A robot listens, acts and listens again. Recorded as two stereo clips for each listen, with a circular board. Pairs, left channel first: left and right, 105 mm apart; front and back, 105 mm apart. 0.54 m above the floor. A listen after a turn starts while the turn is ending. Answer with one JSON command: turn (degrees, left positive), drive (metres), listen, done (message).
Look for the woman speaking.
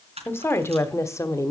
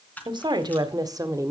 {"turn": 135}
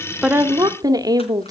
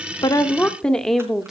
{"turn": -95}
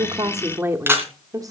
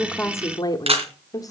{"turn": -45}
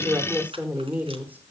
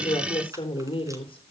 {"turn": -20}
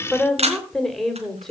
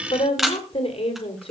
{"done": "Facing the woman speaking, 2 to 4 m away."}